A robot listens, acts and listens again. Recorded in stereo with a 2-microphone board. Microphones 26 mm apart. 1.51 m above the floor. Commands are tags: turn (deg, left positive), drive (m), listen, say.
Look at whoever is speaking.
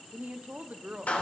<turn deg="-90"/>
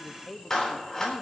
<say>Found it: a woman speaking, straight ahead.</say>